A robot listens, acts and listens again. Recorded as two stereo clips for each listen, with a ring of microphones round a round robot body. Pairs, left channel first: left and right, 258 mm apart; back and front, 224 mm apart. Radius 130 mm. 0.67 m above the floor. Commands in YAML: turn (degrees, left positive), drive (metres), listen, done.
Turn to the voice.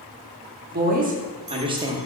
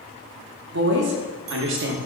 turn: -15
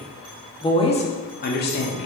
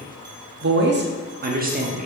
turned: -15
turn: 50
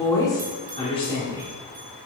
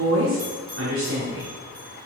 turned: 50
turn: 25
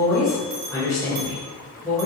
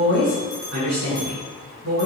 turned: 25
turn: 15
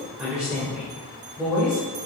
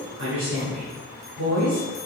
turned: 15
done: "Found it: a woman speaking, straight ahead, 2 to 4 m away."